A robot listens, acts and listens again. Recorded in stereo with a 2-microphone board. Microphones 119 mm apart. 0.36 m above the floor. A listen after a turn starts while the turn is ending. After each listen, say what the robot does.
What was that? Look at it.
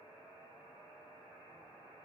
Keep listening.
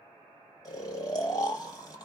Turn 35° left.
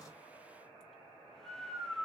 Found it: snoring, straight ahead.